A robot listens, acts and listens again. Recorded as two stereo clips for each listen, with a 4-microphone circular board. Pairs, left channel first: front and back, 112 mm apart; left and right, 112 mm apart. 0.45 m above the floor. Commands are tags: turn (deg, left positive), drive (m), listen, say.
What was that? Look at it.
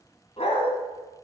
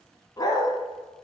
<turn deg="35"/>
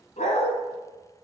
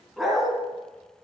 <say>Facing the dog barking.</say>